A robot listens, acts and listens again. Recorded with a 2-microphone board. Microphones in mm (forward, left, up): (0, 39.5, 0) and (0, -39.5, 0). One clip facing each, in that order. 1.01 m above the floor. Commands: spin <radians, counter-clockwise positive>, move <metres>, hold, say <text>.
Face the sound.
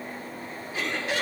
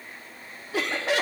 spin -1.57
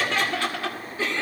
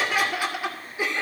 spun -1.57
spin -0.26
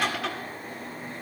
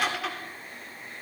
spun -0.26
say Found it: laughter, straight ahead, 2 to 4 m away.